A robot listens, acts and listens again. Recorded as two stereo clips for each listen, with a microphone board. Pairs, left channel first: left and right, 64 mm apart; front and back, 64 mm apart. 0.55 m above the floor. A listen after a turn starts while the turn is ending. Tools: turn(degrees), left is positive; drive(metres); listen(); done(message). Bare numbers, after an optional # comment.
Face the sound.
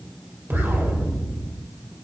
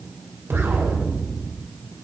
# The explosion: 140° right.
turn(-140)
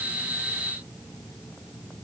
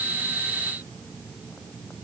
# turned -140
done("I heard an explosion from this way, but can't make it out now.")